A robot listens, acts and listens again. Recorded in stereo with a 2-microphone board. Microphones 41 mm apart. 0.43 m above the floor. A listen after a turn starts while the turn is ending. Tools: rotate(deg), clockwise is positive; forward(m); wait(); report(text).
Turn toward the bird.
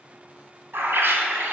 rotate(70)
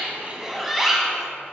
report("Facing the bird, under 1 m away.")